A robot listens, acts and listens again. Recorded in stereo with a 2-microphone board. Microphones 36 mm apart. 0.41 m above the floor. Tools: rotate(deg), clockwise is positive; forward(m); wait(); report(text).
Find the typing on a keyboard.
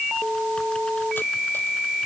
wait()
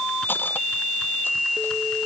wait()
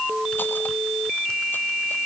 report("I can't make out typing on a keyboard to turn to.")